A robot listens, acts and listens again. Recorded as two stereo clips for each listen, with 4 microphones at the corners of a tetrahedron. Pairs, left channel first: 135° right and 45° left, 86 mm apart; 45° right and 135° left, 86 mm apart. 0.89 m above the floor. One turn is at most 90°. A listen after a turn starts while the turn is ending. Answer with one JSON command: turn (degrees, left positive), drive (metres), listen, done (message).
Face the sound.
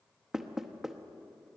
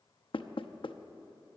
{"turn": -40}
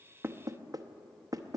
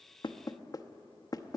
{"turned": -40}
{"done": "Found it: knocking, straight ahead, under 1 m away."}